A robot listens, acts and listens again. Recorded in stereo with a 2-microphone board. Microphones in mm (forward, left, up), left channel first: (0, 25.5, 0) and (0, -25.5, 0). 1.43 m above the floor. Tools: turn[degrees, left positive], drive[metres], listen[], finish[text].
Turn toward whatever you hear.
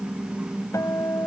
Action: turn[90]
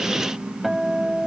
Action: finish[Found it: a guitar, straight ahead.]